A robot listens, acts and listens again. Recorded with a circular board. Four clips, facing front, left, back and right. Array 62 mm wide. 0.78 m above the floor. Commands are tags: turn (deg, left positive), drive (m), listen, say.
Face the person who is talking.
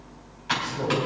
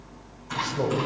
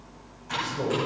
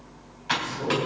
<turn deg="95"/>
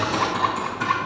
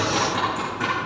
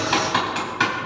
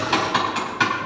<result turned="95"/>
<listen/>
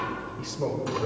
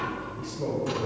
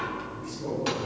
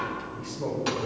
<turn deg="10"/>
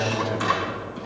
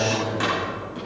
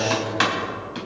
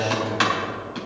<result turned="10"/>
<say>Facing the man speaking, 2 to 4 m away.</say>